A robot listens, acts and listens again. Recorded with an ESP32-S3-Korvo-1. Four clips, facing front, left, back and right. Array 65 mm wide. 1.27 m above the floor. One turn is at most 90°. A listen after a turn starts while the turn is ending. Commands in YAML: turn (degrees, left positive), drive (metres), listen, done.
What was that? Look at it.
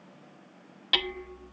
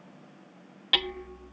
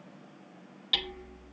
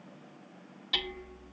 turn: 50
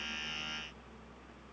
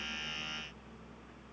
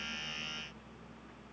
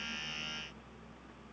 listen: true
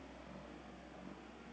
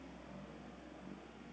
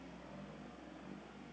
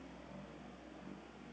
listen: true
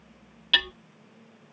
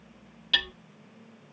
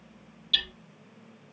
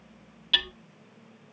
done: "Facing the hammering, under 1 m away."